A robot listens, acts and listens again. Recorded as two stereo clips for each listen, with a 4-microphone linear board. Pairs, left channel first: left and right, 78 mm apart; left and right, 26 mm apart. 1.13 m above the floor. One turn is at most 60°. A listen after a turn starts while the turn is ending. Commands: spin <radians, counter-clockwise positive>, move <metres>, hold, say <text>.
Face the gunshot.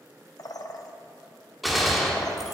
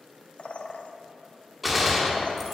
spin 0.52
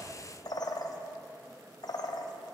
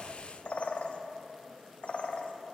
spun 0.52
hold
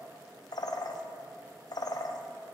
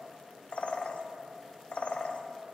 say I heard a gunshot, but can't make it out now. It was about 30° right or 150° left.